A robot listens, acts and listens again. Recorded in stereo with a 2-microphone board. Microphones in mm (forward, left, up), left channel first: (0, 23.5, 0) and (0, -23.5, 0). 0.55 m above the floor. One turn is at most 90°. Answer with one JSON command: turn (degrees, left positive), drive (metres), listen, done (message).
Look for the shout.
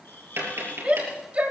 {"turn": -30}
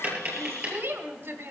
{"turn": -90}
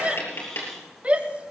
{"turn": -30}
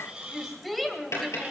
{"done": "Facing the shout, 2 to 4 m away."}